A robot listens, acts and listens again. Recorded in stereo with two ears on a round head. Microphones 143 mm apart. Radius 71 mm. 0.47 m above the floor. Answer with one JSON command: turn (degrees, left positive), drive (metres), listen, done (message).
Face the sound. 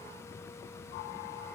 {"listen": true}
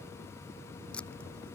{"turn": 30}
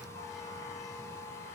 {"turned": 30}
{"listen": true}
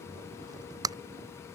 {"turn": -20}
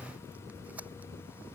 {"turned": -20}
{"listen": true}
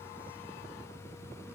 {"listen": true}
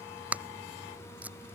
{"turn": -10}
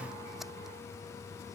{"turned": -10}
{"listen": true}
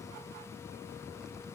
{"listen": true}
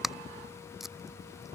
{"done": "Found it: tape being pulled, straight ahead."}